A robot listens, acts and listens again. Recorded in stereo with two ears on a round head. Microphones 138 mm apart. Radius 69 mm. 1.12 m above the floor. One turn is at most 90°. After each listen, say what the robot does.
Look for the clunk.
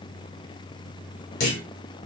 Turn 65° left.
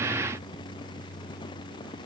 Keep listening.
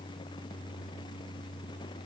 I heard a clunk, but can't make it out now. It was about straight ahead or 50° left.